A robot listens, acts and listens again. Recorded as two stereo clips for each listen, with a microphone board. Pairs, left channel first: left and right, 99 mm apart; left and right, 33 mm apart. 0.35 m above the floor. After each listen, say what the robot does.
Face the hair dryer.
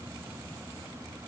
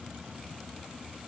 Keep listening.
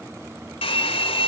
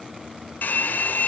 Turn 70° left.
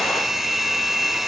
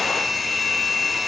Facing the hair dryer.